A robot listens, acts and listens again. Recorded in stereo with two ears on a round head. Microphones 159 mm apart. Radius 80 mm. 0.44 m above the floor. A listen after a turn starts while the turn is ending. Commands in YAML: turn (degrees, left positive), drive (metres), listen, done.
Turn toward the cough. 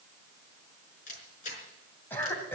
turn: 30
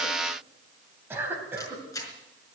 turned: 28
turn: -15
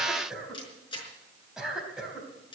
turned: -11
done: "Found it: a cough, straight ahead, 2 to 4 m away."